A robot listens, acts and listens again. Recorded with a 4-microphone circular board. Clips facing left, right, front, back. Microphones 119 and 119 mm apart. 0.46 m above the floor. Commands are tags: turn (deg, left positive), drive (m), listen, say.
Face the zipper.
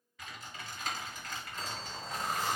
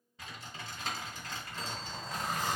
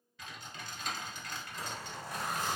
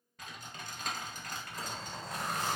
<turn deg="170"/>
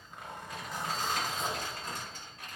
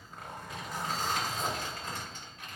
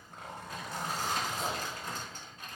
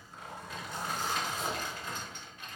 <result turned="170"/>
<say>Found it: a zipper, straight ahead, 1 to 2 m away.</say>